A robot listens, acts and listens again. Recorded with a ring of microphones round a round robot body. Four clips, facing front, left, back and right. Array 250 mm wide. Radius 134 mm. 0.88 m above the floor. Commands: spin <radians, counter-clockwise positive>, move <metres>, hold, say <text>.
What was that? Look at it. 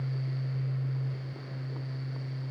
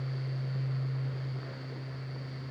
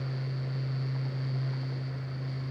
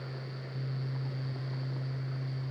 hold
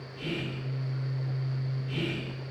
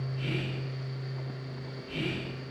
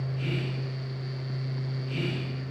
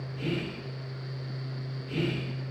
spin -1.66
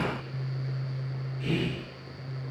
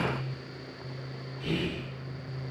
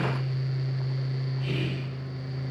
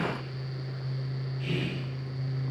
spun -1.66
spin 0.35
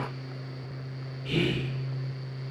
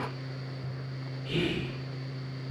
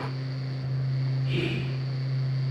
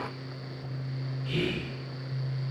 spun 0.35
say Found it: whispering, straight ahead.